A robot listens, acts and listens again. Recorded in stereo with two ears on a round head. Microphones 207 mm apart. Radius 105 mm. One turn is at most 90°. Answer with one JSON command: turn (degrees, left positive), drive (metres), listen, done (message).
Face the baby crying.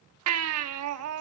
{"turn": -90}
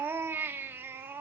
{"turn": -10}
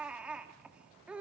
{"done": "Facing the baby crying, 1 to 2 m away."}